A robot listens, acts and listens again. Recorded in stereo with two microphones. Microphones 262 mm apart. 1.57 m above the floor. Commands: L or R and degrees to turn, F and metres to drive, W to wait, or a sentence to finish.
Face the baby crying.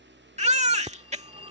R25
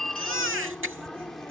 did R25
R125
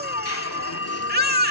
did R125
R40
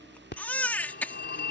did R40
Found it: a baby crying, straight ahead.